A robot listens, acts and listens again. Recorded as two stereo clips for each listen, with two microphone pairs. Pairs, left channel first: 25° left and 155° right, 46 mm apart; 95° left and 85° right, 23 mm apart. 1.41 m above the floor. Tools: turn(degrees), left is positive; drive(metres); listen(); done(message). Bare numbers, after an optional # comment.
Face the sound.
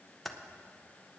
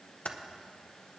# The typing on a keyboard: 120° left.
turn(120)
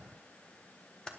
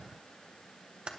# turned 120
# The typing on a keyboard is now 45° right.
turn(-45)
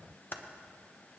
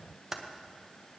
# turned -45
# The typing on a keyboard is now 10° right.
turn(-10)
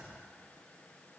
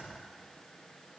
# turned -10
listen()
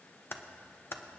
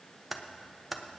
done("Facing the typing on a keyboard, under 1 m away.")